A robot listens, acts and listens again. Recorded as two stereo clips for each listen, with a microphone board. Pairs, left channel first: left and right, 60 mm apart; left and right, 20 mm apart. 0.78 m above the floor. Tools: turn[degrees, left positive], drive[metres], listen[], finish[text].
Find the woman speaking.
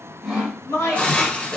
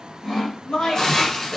Thought: The woman speaking: about 60° left or 120° left.
Action: turn[60]
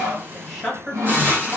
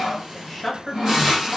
Action: finish[Found it: a woman speaking, straight ahead.]